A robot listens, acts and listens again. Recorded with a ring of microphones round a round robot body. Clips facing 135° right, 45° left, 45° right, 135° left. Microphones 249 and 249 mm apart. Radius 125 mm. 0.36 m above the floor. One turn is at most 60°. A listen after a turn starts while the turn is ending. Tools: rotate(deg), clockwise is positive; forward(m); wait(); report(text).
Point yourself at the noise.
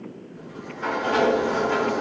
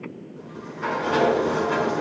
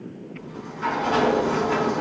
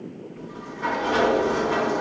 rotate(15)
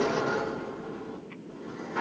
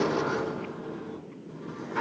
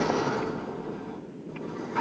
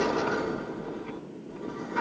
report("Found it: a sliding door, straight ahead, over 4 m away.")